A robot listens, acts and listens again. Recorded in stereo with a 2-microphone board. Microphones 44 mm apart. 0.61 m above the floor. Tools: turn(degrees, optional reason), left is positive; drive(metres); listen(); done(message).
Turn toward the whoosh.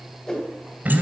turn(degrees=15, reason="The whoosh: about 15° left or 165° left.")
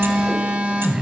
listen()
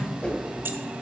listen()
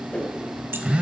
turn(degrees=150, reason="So it is at 150° left.")
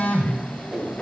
turn(degrees=-25, reason="The whoosh is now 25° right.")
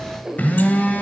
turn(degrees=-20, reason="The whoosh is now 20° right.")
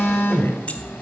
listen()
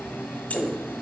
done("Found it: a whoosh, straight ahead.")